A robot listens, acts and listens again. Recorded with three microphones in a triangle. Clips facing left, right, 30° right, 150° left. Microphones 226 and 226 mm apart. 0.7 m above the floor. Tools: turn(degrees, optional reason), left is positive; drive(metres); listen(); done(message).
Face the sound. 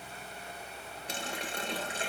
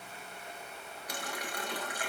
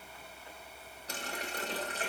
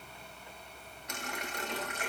turn(degrees=25, reason="The running tap: 25° left.")
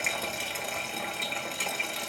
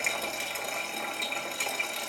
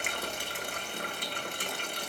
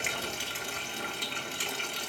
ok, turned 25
done("Found it: a running tap, straight ahead.")